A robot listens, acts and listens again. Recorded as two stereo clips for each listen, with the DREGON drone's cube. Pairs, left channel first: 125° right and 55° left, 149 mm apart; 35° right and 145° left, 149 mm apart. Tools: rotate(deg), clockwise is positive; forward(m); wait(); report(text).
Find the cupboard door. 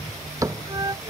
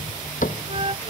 rotate(15)
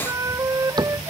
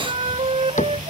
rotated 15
report("Facing the cupboard door.")